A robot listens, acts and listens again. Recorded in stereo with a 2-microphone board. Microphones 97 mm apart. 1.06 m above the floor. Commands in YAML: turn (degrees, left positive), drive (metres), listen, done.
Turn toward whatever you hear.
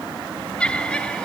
turn: 30
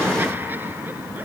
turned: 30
listen: true
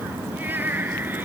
turn: -20
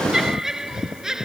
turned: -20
done: "Facing the laughter."